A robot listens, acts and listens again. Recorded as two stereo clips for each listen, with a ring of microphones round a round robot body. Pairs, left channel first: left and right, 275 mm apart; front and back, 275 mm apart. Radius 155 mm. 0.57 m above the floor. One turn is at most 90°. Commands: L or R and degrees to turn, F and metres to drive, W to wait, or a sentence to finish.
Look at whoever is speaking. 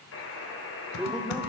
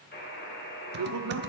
L90
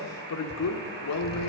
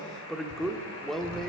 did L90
L90
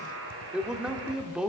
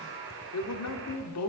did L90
Found it: a man speaking, straight ahead.